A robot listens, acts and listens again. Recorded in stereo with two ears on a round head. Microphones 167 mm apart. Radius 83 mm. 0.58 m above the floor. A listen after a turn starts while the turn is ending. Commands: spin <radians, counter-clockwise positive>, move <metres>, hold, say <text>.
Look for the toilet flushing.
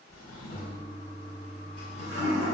spin 0.96
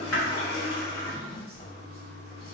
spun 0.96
spin 1.05
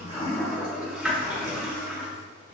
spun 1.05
say Facing the toilet flushing, 1 to 2 m away.